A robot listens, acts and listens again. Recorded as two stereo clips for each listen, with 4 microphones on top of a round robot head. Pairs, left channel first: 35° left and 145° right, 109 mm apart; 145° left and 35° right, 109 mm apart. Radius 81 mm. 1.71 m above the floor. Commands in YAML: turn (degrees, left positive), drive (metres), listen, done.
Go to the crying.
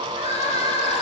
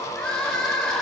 turn: 65
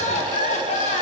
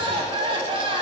turn: 10
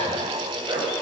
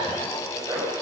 listen: true
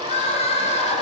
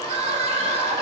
drive: 1.0
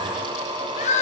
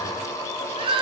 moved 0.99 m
turn: 10
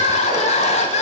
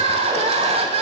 drive: 1.0
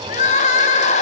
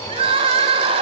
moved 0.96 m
turn: 10
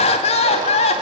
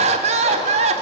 drive: 1.0
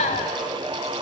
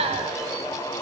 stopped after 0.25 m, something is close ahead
done: "Arrived at the crying, straight ahead."